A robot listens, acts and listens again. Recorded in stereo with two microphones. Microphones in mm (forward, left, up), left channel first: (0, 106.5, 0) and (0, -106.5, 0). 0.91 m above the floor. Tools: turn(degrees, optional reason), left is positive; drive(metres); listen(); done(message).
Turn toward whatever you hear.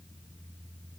listen()
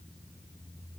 listen()
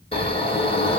turn(degrees=25, reason="The snoring: about 25° left or 155° left.")
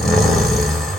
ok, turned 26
done("Facing the snoring, 1 to 2 m away.")